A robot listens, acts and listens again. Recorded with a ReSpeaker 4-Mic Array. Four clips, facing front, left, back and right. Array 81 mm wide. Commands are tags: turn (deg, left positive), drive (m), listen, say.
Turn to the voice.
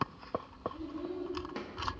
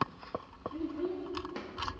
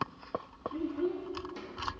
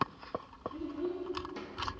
<turn deg="160"/>
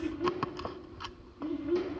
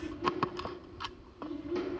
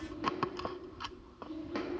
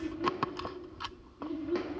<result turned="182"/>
<turn deg="-20"/>
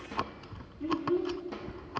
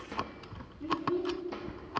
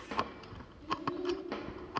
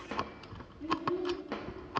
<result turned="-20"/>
<say>Found it: a child speaking, straight ahead.</say>